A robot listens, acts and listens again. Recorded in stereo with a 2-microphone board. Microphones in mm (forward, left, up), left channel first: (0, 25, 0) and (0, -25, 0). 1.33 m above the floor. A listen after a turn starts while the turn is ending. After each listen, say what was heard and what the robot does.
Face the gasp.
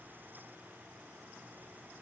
Keep listening.
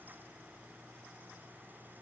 Keep listening.
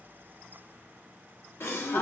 The gasp: about 60° left or 120° left. Turn 60° left.
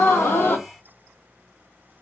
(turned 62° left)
So it is at 45° left. Turn 45° left.
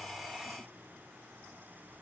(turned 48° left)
I heard a gasp from this way, but can't make it out now.